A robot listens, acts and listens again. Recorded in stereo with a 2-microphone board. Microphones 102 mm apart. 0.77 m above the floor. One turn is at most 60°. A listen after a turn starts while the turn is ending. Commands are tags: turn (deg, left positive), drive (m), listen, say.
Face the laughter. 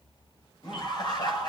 <turn deg="45"/>
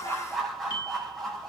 <say>Found it: laughter, straight ahead.</say>